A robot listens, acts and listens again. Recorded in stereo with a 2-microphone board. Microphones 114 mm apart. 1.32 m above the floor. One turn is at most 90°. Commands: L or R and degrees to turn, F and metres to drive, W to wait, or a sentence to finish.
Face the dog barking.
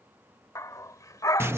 L30
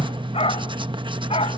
L90
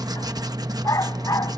L30
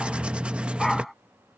Found it: a dog barking, straight ahead.